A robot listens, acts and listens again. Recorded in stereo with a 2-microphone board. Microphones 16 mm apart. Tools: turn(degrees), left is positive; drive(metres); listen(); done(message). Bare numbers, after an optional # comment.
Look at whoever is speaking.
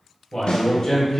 # The man speaking: about 35° left or 145° left.
turn(35)
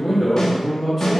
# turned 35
done("Facing the man speaking.")